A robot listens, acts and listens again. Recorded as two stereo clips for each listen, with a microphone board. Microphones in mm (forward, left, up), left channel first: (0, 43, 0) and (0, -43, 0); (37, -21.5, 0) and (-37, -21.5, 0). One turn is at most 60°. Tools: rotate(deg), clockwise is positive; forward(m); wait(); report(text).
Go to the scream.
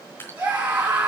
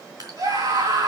rotate(60)
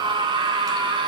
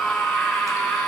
rotate(60)
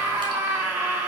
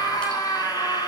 rotate(30)
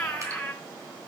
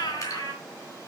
forward(1.0)
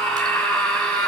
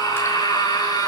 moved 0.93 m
rotate(-10)
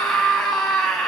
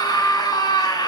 forward(1.0)
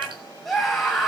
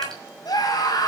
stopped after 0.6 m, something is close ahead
report("Something is in my way. I am facing the scream but have not reached it.")